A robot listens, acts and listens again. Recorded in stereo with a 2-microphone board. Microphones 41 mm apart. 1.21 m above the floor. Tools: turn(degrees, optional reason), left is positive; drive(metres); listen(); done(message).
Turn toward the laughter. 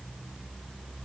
listen()
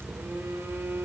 listen()
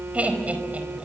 turn(degrees=-35, reason="The laughter: about 35° right or 145° right.")
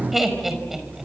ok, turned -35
done("Found it: laughter, straight ahead, over 4 m away.")